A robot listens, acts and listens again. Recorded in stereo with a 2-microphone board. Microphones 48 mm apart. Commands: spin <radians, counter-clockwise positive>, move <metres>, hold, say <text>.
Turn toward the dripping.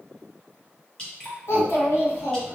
spin 0.44
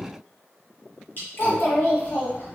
spin 2.27
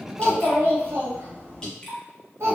spin 0.26
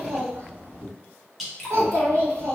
say Facing the dripping.